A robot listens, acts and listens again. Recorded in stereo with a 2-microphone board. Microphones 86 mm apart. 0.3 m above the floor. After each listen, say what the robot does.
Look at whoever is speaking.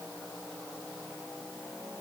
Keep listening.
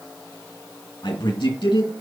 Turn 70° left.
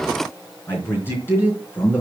Turn 25° left.
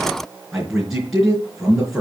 Found it: a man speaking, straight ahead.